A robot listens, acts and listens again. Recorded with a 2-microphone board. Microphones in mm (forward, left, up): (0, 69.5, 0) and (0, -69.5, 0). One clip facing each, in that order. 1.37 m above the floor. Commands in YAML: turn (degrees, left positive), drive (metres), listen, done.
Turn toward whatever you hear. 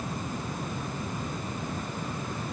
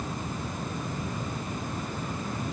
listen: true
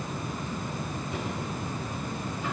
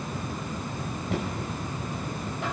listen: true
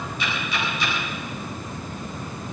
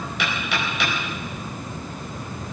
turn: -75
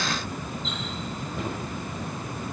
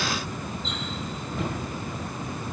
done: "Facing the knocking."